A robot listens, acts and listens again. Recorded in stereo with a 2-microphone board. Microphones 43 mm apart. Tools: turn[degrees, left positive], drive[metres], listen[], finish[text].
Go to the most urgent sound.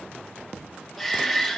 Action: turn[30]
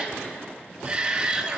Thought: So it is at 30° right.
Action: turn[-30]
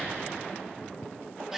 Thought: The shout is now 10° right.
Action: turn[-10]
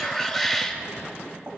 Action: drive[1.0]
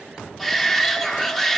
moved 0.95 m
Action: drive[1.0]
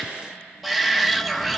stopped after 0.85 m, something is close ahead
Action: finish[I am next to the shout.]